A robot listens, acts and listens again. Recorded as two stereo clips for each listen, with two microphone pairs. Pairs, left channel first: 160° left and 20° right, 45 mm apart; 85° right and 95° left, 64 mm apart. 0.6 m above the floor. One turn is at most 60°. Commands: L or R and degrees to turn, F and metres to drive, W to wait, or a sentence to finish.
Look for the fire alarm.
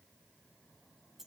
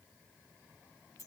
W
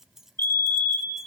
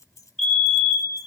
R60
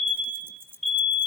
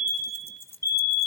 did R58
R60
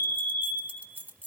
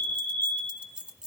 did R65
R50
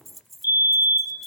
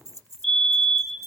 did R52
Facing the fire alarm.